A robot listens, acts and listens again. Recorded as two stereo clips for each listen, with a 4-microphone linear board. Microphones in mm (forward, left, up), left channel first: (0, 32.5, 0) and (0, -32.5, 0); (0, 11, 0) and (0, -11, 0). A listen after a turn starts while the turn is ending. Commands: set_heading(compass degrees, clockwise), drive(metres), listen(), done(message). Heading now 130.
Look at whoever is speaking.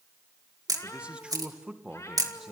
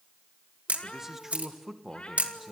set_heading(160)
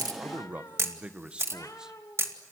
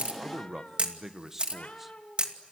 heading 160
set_heading(175)
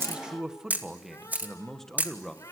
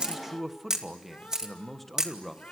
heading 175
set_heading(145)
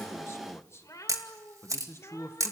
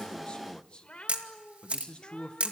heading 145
set_heading(10)
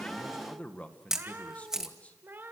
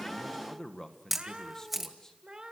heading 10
set_heading(350)
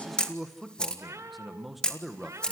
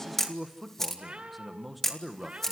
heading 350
done("Found it: a man speaking, straight ahead, 1 to 2 m away.")